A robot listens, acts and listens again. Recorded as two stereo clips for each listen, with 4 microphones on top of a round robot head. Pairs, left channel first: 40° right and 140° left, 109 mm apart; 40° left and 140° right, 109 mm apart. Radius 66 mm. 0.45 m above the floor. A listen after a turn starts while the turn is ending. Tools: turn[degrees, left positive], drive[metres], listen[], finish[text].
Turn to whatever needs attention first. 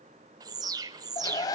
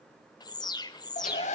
Thought: The alarm: 85° left.
Action: turn[85]
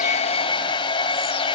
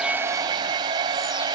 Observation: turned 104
Thought: Nothing new. It was at 15° right.
Action: turn[-15]
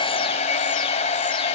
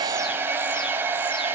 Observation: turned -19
Action: listen[]
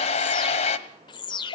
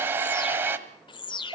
Action: finish[Facing the alarm.]